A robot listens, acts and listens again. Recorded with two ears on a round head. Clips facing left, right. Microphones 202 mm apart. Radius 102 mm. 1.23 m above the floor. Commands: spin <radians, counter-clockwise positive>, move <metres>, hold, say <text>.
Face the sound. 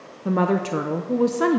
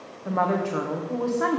spin 0.79
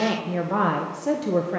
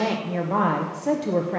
say Found it: a woman speaking, straight ahead, under 1 m away.